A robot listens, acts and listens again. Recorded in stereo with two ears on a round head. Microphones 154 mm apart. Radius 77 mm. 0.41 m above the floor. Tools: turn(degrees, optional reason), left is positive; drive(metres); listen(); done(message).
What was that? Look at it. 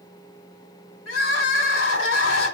turn(degrees=90)
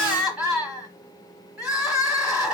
done("Facing the crying.")